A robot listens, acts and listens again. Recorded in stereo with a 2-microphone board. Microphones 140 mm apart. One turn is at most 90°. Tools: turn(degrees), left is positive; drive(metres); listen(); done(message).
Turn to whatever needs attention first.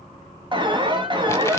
turn(degrees=-35)
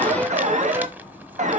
turn(degrees=-90)
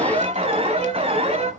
turn(degrees=-50)
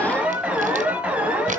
turn(degrees=-10)
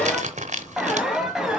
done("Facing the alarm.")